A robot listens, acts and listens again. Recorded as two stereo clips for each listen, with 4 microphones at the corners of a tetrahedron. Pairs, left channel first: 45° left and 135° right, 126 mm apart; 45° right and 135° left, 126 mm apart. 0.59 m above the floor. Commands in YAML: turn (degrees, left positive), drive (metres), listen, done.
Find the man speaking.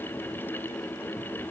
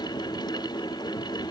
listen: true
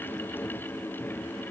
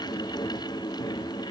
listen: true
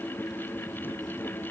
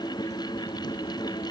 done: "I can't make out a man speaking."